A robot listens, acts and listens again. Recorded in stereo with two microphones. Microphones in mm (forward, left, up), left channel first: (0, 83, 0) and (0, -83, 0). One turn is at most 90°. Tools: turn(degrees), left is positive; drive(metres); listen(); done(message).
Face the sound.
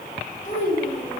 turn(degrees=55)
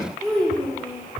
done("Facing the child speaking.")